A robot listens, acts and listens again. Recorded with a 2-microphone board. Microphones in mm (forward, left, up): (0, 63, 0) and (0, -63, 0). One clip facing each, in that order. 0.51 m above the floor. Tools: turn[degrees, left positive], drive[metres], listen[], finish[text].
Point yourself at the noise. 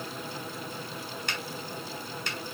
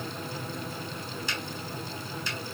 Thought: The finger snap: about 60° left or 120° left.
Action: turn[60]
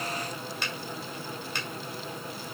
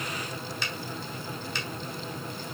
Thought: So it is at 55° left.
Action: turn[55]
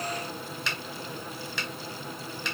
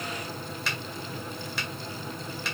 Action: finish[Facing the finger snap.]